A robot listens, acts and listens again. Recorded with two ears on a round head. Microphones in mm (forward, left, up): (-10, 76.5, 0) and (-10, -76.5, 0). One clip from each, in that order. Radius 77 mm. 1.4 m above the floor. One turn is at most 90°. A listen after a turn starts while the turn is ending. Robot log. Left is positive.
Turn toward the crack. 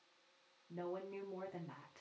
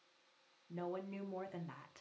cmd idle
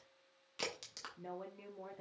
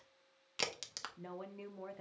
note: The crack: about 35° right or 145° right.
cmd yaw -35
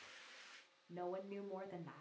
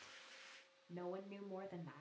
cmd idle
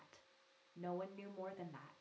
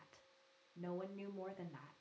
end: I heard a crack, but can't make it out now. It was about straight ahead or 110° right.